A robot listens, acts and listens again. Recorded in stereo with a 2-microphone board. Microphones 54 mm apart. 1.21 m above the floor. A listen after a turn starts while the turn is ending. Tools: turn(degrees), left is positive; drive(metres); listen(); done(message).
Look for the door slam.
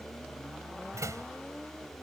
turn(degrees=-90)
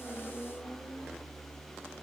done("I heard a door slam from this way, but can't make it out now.")